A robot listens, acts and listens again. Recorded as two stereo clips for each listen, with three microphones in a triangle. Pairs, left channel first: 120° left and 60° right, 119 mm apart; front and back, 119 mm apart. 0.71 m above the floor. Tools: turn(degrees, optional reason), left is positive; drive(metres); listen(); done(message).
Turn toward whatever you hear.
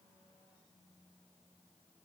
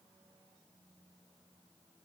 listen()
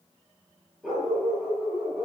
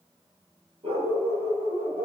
turn(degrees=-140, reason="The dog barking: 140° right.")
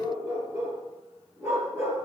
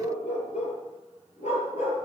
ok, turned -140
turn(degrees=10, reason="The dog barking is now 10° left.")
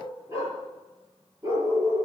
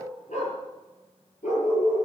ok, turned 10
done("Facing the dog barking.")